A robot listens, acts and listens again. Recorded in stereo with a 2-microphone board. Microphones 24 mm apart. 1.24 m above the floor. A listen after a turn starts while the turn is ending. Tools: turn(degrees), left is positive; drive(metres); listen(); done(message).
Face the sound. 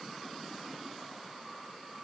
listen()
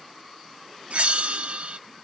turn(degrees=-60)
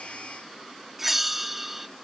turn(degrees=-10)
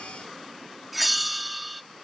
done("Found it: a bell, straight ahead.")